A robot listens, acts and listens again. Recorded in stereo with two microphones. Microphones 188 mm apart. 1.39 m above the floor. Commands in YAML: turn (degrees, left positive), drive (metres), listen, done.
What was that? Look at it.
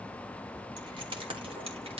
turn: -30
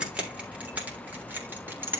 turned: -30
turn: -10
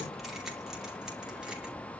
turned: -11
listen: true
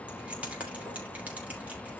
turn: -10
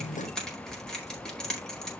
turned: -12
done: "Facing the keys jangling."